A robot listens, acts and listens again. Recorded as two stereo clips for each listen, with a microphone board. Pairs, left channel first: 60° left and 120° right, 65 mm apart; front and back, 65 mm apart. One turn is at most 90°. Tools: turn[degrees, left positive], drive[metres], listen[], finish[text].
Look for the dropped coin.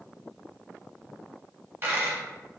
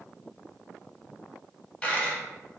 Thought: The dropped coin: 75° right.
Action: turn[-75]
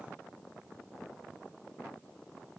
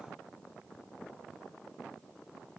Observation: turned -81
Thought: Nothing new. It was at 10° left.
Action: turn[10]
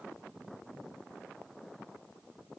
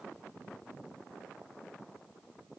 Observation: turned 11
Action: finish[Facing where the dropped coin came from. I can't hear it now.]